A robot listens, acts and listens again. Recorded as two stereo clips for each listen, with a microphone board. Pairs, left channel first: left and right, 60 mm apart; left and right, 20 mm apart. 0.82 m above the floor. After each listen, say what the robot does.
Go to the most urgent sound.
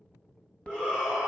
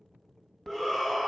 Turn 30° right.
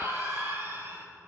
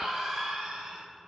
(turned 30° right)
Turn 135° right.
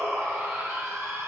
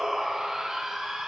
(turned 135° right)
Turn 45° right.
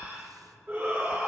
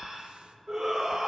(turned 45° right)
Turn 35° right.
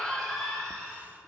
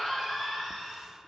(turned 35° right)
Turn 10° left.
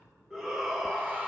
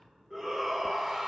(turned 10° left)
Drive 1.0 m forward.
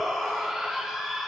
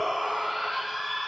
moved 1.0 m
Drive 1.0 m forward.
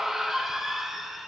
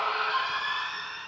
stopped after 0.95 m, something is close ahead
Arrived at the shout, straight ahead.